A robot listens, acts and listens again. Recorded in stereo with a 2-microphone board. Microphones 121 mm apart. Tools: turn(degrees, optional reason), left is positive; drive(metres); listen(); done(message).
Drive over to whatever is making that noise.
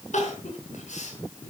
turn(degrees=90)
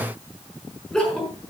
drive(metres=1.0)
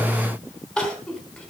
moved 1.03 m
drive(metres=1.0)
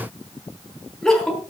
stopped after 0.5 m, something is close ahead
done("Blocked. The crying is further on, straight ahead.")